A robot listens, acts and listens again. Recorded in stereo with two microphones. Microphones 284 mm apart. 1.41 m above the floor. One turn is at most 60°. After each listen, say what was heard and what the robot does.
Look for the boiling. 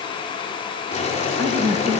The boiling: about 25° left or 155° left. Turn 25° left.
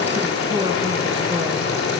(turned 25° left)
So it is at 125° left. Turn 60° left.
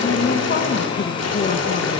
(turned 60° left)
The boiling is now 65° left. Turn 60° left.
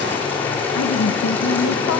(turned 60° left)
Found it: boiling, straight ahead, 2 to 4 m away.